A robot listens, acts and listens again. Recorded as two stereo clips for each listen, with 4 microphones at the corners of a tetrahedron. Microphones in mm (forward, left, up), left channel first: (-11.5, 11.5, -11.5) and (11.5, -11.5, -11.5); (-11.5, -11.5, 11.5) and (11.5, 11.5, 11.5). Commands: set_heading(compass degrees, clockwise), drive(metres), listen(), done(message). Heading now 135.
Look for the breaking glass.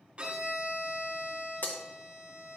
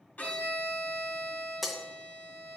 set_heading(5)
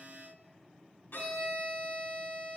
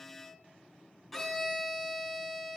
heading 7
done("Facing where the breaking glass came from. I can't hear it now.")